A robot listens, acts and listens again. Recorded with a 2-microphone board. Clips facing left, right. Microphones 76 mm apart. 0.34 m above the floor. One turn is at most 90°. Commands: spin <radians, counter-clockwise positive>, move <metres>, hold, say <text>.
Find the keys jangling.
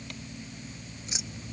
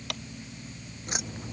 spin -0.87
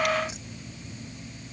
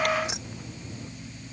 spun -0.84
spin -1.40
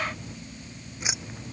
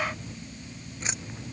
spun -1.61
spin 0.17
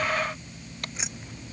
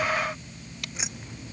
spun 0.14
say Found it: keys jangling, straight ahead.